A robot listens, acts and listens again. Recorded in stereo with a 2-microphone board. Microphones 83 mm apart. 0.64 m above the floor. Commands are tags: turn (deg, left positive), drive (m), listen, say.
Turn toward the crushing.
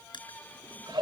<turn deg="75"/>
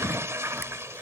<listen/>
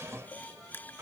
<turn deg="25"/>
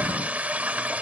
<listen/>
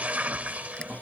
<listen/>
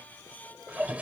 <say>Facing where the crushing came from. I can't hear it now.</say>